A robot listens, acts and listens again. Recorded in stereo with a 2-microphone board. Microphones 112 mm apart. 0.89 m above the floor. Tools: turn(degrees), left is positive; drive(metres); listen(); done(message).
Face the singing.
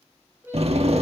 turn(degrees=-20)
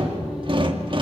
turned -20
listen()
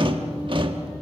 listen()
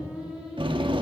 turn(degrees=-30)
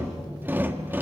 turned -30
listen()
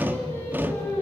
turn(degrees=25)
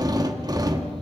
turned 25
listen()
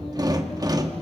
listen()
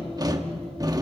done("Facing where the singing came from. I can't hear it now.")